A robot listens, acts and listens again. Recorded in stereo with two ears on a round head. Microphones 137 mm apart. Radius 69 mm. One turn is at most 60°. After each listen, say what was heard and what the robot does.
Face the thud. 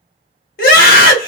Keep listening.
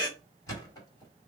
The thud: about 20° left or 160° left. Turn 20° left.
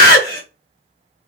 Keep listening.
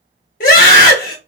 I heard a thud, but can't make it out now. It was about straight ahead or 140° left.